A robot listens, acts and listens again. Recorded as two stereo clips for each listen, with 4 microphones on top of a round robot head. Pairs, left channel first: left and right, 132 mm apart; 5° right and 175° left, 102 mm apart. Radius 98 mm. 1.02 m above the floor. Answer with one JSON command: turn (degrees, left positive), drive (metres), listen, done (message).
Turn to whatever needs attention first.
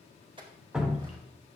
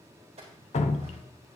{"listen": true}
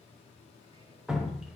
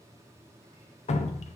{"listen": true}
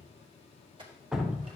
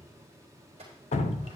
{"done": "I can't make out anything urgent, only a clink and dripping."}